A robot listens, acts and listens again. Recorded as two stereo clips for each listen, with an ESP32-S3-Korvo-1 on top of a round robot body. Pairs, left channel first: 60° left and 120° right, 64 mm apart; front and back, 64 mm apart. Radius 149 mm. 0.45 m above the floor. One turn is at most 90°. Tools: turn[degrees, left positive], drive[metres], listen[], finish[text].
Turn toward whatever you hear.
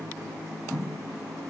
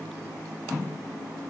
Action: listen[]
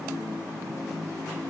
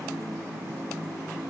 Action: listen[]
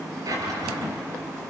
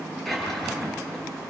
Thought: The drawer: 85° right.
Action: turn[-85]
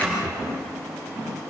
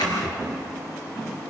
Thought: The drawer is now 10° right.
Action: turn[-10]
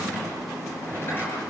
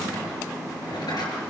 Action: finish[Facing the drawer.]